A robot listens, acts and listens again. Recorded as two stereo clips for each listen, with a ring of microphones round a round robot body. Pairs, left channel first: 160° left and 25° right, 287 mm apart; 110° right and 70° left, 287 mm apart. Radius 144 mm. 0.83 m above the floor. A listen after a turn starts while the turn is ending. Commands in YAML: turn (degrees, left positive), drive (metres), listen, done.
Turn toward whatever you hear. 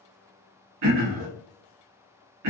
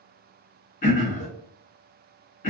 turn: -50
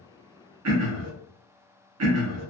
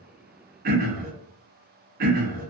turn: 10
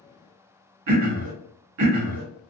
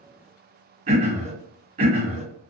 done: "Found it: throat clearing, straight ahead."